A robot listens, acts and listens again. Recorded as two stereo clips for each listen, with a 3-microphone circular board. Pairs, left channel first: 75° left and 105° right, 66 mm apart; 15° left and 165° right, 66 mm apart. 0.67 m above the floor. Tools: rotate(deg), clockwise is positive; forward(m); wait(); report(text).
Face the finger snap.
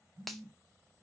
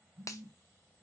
rotate(15)
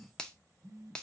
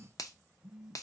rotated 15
report("Facing the finger snap.")